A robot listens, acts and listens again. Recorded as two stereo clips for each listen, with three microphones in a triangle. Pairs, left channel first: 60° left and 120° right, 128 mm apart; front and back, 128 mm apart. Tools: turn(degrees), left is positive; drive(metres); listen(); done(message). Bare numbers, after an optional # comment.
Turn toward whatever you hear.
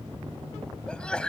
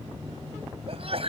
# The sneeze: 145° left.
turn(145)
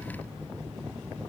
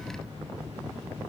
done("I heard a sneeze from this way, but can't make it out now.")